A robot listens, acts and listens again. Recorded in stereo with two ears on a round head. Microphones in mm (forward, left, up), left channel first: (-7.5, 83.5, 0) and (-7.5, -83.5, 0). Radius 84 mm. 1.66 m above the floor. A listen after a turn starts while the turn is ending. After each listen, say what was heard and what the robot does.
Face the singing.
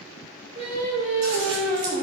The singing: about 40° right or 140° right. Turn 40° right.
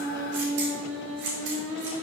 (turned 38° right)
So it is at 100° right. Turn 100° right.
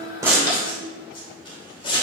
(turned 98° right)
Keep listening.
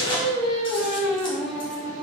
Found it: singing, straight ahead.